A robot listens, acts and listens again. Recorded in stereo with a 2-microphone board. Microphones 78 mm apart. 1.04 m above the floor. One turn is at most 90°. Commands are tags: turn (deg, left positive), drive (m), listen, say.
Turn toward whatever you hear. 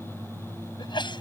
<turn deg="75"/>
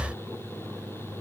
<listen/>
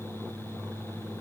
<say>I heard a sneeze, but can't make it out now. It was about straight ahead or 30° left.</say>